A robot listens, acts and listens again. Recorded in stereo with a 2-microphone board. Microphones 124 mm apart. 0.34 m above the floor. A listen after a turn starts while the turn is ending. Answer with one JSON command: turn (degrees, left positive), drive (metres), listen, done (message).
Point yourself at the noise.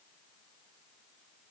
{"listen": true}
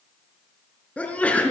{"turn": 30}
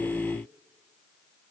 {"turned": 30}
{"listen": true}
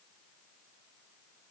{"done": "I heard a sneeze, but can't make it out now. It was about 20° right or 140° left."}